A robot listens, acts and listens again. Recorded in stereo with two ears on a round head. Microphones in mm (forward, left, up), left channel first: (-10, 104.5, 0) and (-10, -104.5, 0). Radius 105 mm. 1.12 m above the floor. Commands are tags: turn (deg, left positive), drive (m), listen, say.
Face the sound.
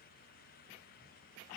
<listen/>
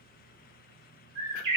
<turn deg="-20"/>
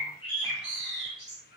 <say>Found it: a bird, straight ahead, 1 to 2 m away.</say>